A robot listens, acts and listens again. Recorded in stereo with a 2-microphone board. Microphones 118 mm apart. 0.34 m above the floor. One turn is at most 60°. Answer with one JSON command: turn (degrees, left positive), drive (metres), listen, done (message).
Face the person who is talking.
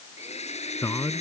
{"turn": 30}
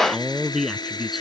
{"done": "Facing the man speaking."}